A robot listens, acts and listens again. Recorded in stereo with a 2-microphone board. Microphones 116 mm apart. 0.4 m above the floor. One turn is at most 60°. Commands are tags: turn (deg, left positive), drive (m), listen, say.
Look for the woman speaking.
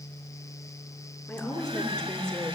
<turn deg="30"/>
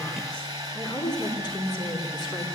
<turn deg="60"/>
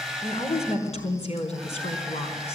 <turn deg="60"/>
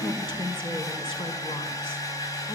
<turn deg="45"/>
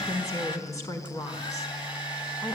<turn deg="30"/>
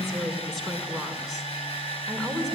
<say>Found it: a woman speaking, straight ahead, over 4 m away.</say>